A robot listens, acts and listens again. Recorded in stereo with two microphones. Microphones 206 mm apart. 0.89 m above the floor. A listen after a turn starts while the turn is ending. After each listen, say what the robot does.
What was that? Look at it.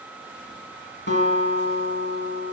Turn 65° left.
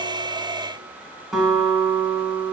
Facing the guitar.